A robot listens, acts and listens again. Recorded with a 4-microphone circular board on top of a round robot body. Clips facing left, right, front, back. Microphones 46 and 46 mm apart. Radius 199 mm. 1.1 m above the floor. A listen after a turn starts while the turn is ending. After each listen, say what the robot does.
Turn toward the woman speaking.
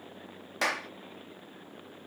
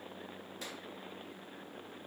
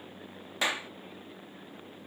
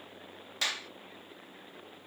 Keep listening.
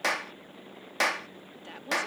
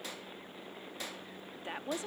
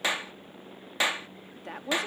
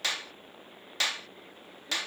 Turn 20° right.
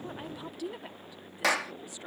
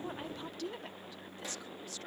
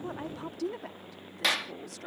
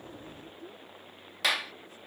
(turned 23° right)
Turn 15° left.
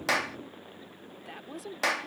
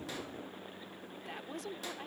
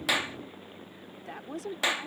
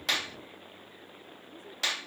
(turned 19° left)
Found it: a woman speaking, straight ahead.